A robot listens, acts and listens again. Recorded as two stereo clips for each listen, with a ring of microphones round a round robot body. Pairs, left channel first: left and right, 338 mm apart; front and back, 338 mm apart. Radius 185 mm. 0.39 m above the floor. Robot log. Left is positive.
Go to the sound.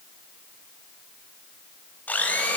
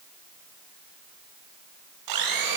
note: The blender: 175° left.
cmd yaw +175
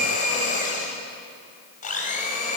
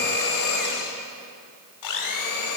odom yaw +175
note: The blender is now 25° left.
cmd yaw +25
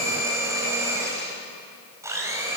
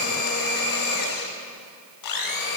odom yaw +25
note: The blender is now 10° right.
cmd yaw -10
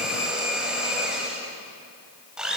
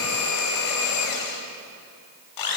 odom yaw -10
cmd fwd 1.0
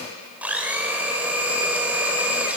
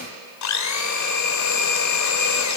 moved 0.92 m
cmd fwd 1.0
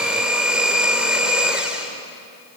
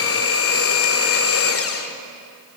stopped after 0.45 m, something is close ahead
end: Arrived at the blender, straight ahead.